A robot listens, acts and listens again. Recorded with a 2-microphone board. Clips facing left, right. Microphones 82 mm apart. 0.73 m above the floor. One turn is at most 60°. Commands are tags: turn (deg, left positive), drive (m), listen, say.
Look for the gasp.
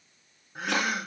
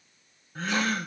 <turn deg="30"/>
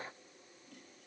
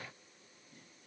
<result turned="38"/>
<listen/>
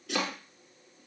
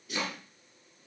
<say>I heard a gasp, but can't make it out now. It was about 25° right or 130° left.</say>